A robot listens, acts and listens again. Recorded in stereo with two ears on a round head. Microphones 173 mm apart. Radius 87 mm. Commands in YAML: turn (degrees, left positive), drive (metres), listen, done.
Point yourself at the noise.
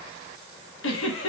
turn: 70
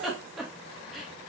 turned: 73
done: "Facing the giggle."